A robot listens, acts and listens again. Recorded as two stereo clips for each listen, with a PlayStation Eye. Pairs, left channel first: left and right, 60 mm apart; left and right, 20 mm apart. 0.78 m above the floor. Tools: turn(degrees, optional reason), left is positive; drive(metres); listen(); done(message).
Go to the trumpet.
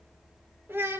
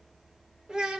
listen()
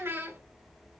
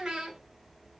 listen()
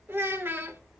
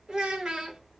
done("I can't make out a trumpet to turn to.")